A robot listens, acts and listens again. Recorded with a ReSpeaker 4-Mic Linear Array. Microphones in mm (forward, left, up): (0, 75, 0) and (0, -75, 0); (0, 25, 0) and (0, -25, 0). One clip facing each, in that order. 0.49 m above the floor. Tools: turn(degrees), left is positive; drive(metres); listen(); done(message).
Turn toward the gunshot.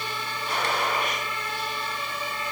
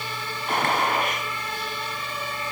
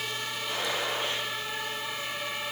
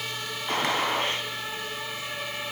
turn(degrees=-55)
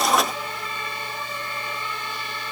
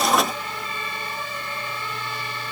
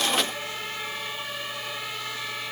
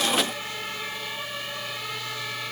listen()
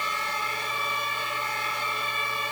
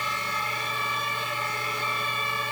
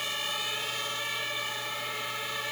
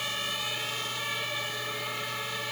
done("I heard a gunshot, but can't make it out now. It was about straight ahead or 70° right.")